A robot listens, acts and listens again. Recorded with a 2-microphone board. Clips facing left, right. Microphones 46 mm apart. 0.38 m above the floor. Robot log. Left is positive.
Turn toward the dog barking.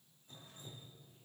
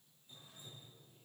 cmd idle
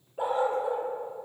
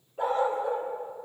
cmd yaw +30
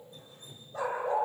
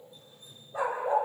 note: So it is at 15° right.
cmd yaw -15
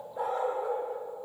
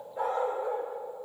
end: Found it: a dog barking, straight ahead, over 4 m away.